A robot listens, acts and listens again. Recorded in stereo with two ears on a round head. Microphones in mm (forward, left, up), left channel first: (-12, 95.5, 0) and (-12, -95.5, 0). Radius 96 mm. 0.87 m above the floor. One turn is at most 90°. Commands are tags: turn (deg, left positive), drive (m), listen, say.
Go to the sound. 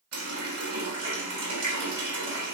<turn deg="-90"/>
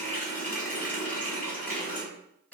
<turn deg="10"/>
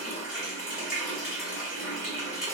<drive m="1.0"/>
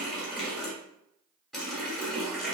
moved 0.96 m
<drive m="1.0"/>
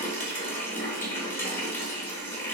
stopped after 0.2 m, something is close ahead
<turn deg="10"/>
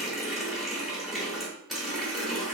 <say>I am next to the running tap.</say>